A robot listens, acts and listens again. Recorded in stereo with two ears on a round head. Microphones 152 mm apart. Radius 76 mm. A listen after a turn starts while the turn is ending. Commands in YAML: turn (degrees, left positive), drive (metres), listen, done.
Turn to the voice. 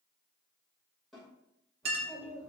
turn: 20
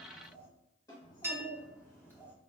turn: 30
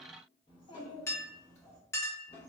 turn: 30
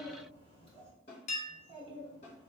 turn: 145
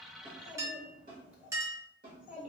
turn: -10
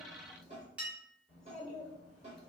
done: "Facing the child speaking."